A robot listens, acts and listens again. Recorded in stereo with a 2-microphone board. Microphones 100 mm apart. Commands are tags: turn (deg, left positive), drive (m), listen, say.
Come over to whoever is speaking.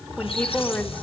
<turn deg="15"/>
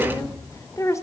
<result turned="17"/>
<turn deg="145"/>
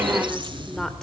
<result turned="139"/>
<drive m="1.0"/>
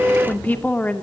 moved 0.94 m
<turn deg="20"/>
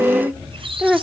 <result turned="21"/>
<drive m="1.0"/>
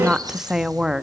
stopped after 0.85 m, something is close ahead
<say>I am next to the woman speaking.</say>